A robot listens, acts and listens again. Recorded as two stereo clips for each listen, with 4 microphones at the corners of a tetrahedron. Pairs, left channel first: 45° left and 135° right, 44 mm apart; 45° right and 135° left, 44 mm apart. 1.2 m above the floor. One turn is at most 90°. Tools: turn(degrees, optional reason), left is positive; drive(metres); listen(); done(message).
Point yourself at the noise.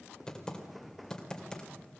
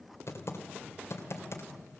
turn(degrees=-30, reason="The typing on a keyboard: 30° right.")
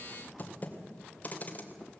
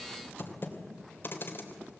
turn(degrees=-10, reason="The typing on a keyboard is now 10° right.")
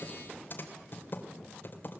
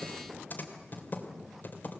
done("Found it: typing on a keyboard, straight ahead, 2 to 4 m away.")